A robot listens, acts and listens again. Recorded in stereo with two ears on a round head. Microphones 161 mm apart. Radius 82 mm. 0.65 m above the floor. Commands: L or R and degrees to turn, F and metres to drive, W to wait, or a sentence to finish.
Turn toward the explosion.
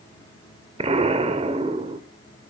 R35
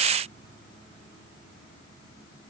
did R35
W
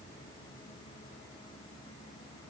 I heard an explosion, but can't make it out now. It was about straight ahead or 110° right.